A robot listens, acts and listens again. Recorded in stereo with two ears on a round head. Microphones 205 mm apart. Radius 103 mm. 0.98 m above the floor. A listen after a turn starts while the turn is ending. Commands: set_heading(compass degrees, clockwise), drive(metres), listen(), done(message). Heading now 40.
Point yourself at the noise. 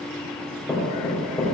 set_heading(10)
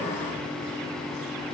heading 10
listen()
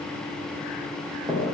set_heading(30)
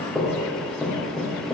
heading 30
done("Found it: knocking, straight ahead.")